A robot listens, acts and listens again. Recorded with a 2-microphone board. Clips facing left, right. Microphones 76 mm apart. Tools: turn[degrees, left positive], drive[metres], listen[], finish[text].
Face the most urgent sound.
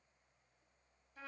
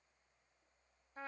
Action: listen[]
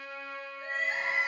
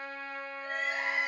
Thought: The crying: about 30° left or 150° left.
Action: turn[30]
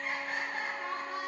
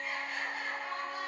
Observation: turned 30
Thought: So it is at 120° left.
Action: turn[120]
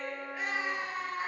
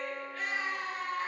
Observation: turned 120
Thought: The crying is now 15° left.
Action: turn[15]
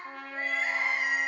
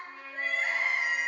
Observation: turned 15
Thought: The crying is now 10° left.
Action: turn[10]
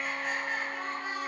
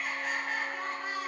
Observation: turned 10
Action: finish[Facing the crying.]